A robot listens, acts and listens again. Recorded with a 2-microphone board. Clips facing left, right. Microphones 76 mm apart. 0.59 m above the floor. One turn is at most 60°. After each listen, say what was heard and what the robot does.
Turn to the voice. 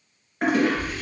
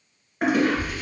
The child speaking: about 45° right or 135° right. Turn 45° right.
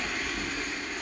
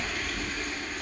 So it is at 90° right. Turn 60° right.
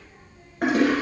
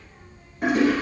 The child speaking is now 40° right. Turn 40° right.
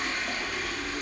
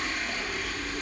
The child speaking is now 15° right. Turn 15° right.
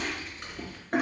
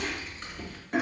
Facing the child speaking.